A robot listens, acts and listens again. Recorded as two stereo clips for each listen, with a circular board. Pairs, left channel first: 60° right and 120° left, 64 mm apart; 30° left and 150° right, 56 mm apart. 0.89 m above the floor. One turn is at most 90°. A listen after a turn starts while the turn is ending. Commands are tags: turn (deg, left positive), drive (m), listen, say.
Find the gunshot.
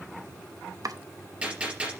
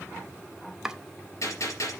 <turn deg="50"/>
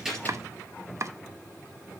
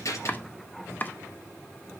<say>Facing where the gunshot came from. I can't hear it now.</say>